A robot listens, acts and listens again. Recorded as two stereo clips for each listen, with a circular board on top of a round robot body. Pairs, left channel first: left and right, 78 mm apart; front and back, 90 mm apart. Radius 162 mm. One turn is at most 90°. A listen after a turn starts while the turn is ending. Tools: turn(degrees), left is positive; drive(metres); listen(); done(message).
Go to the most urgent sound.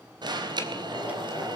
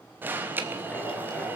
turn(degrees=-90)
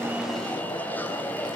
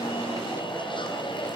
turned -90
turn(degrees=20)
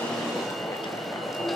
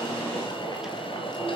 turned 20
drive(metres=1.0)
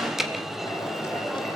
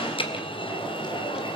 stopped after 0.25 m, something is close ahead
done("Blocked. The alarm is further on, straight ahead.")